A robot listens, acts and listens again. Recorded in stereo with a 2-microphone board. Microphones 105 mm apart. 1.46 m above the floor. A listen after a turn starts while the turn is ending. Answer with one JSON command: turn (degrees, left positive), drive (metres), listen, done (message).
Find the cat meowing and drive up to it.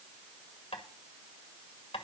{"listen": true}
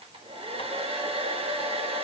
{"listen": true}
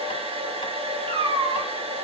{"turn": -65}
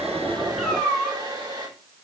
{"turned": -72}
{"drive": 1.0}
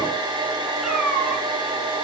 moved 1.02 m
{"drive": 1.0}
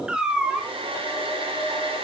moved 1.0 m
{"turn": -10}
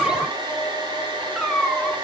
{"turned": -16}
{"drive": 1.0}
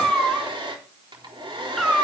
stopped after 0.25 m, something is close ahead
{"done": "Arrived at the cat meowing, straight ahead."}